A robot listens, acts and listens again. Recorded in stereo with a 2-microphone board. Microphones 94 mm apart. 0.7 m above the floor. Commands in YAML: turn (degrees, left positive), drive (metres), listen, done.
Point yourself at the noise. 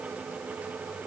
listen: true
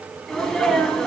turn: 30
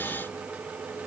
listen: true
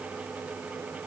done: "I heard a sneeze, but can't make it out now. It was about 25° right or 145° left."